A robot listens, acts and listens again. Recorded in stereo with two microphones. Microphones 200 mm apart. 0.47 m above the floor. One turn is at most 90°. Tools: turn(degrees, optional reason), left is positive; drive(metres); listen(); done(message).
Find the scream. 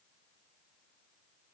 listen()
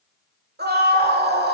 turn(degrees=-50, reason="The scream: about 50° right or 130° right.")
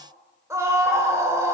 turn(degrees=-15, reason="So it is at 15° right.")
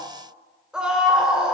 done("Found it: a scream, straight ahead, 1 to 2 m away.")